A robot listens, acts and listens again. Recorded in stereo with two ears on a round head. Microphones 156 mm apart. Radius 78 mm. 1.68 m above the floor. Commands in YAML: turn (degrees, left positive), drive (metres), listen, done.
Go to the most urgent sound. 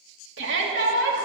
turn: -90
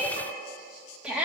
drive: 1.0
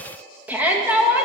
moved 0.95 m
turn: -10
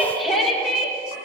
drive: 1.0
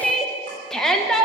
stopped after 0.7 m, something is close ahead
done: "I am next to the shout."